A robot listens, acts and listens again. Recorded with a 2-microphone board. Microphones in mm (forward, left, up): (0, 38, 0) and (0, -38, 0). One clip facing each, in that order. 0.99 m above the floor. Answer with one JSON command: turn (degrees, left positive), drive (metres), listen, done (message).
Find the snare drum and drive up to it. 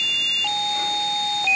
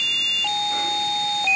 {"listen": true}
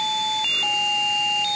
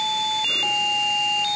{"listen": true}
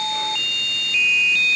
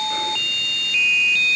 {"done": "I can't make out a snare drum."}